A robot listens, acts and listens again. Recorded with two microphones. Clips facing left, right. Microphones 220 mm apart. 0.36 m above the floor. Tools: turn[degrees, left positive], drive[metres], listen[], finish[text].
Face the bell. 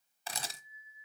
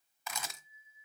Thought: The bell: about 40° right or 140° right.
Action: turn[-40]
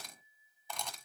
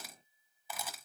Thought: So it is at 95° right.
Action: turn[-95]
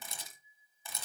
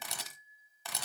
Action: finish[Found it: a bell, straight ahead, 2 to 4 m away.]